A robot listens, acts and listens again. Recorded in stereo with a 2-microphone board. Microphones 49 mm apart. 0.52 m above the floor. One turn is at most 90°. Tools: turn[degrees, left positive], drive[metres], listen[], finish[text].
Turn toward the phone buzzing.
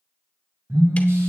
Thought: The phone buzzing: about 60° right or 120° right.
Action: turn[-60]
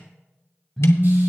Action: finish[Facing the phone buzzing.]